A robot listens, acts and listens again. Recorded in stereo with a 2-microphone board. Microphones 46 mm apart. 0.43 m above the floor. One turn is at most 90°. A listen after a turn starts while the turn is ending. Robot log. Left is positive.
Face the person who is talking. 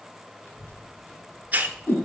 note: The child speaking: about 45° left or 135° left.
cmd yaw +45
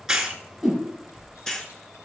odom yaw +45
note: So it is at 85° left.
cmd yaw +85
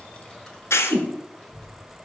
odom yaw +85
note: The child speaking is now 10° left.
cmd yaw +10
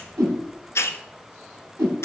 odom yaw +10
end: Found it: a child speaking, straight ahead, 2 to 4 m away.